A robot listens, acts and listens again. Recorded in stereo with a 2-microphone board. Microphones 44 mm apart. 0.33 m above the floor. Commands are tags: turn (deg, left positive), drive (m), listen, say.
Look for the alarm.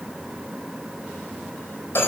<listen/>
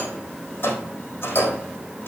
<listen/>
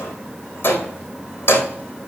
<say>I can't make out an alarm, only a rattle.</say>